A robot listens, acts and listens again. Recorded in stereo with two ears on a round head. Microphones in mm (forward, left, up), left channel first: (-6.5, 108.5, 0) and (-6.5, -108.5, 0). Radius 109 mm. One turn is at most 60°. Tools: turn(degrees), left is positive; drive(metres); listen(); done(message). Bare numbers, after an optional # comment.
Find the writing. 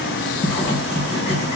# The writing: about 25° left or 155° left.
turn(25)
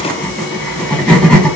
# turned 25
done("Found it: writing, straight ahead, 1 to 2 m away.")